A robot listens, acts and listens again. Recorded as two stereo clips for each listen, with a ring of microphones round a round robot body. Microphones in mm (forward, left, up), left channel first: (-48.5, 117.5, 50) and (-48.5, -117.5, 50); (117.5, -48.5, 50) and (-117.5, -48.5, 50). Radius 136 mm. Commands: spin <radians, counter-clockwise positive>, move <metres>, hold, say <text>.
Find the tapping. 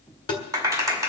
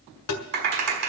spin 0.26
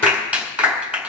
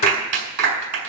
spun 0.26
hold
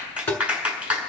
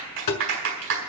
say Found it: tapping, straight ahead, 1 to 2 m away.